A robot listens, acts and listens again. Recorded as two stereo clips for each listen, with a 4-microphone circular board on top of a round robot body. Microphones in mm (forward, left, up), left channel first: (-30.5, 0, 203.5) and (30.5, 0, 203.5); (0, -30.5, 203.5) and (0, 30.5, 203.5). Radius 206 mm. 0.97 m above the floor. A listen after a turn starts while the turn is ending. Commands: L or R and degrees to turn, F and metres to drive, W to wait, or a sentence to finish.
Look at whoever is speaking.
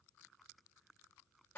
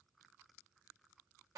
W
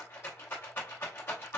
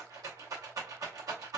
W
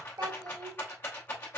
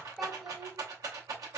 Found it: a child speaking, straight ahead, under 1 m away.